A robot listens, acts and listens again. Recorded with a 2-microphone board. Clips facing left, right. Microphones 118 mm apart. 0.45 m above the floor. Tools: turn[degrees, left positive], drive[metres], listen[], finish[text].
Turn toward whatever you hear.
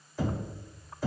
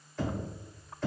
Action: turn[30]
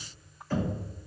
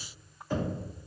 Thought: So it is at 20° right.
Action: turn[-20]
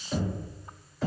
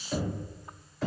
Action: finish[Facing the knocking.]